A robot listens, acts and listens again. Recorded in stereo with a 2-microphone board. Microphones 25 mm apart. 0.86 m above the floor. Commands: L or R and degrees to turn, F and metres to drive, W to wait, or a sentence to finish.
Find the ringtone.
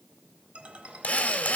R55
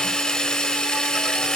W
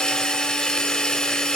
W
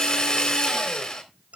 R70
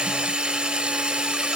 W
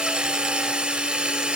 W
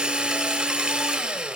I heard a ringtone from this way, but can't make it out now.